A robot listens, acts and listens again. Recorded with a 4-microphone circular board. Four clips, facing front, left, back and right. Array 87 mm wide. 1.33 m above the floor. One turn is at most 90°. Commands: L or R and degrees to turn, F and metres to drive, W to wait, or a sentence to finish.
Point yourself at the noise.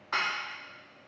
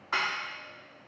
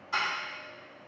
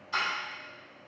L55
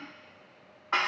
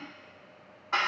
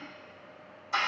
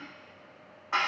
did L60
Found it: dishes clattering, straight ahead.